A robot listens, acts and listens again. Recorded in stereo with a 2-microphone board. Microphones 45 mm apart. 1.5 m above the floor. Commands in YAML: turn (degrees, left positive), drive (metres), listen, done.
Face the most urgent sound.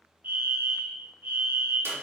turn: -45
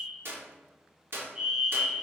turn: -15
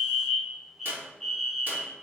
done: "Found it: a fire alarm, straight ahead."